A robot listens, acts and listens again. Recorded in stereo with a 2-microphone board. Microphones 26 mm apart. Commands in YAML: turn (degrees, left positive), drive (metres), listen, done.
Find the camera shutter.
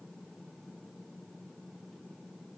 listen: true
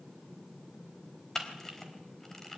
turn: 30
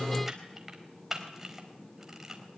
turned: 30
turn: -15
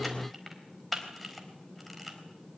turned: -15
done: "Facing the camera shutter."